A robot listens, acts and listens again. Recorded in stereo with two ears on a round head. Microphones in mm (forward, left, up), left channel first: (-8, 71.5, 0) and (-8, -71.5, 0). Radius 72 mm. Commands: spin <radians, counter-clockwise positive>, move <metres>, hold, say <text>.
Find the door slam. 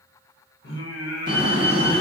spin -0.96
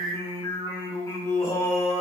hold
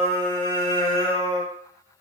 say I heard a door slam, but can't make it out now. It was about straight ahead or 70° right.